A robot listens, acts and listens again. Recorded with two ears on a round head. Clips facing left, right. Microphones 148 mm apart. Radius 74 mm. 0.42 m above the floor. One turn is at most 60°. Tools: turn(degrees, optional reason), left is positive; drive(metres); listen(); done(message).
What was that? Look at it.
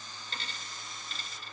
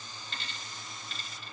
turn(degrees=35, reason="The dropped coin: about 35° left or 145° left.")
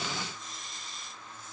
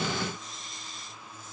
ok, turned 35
listen()
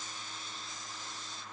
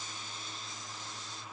done("I heard a dropped coin, but can't make it out now. It was about straight ahead or 110° left.")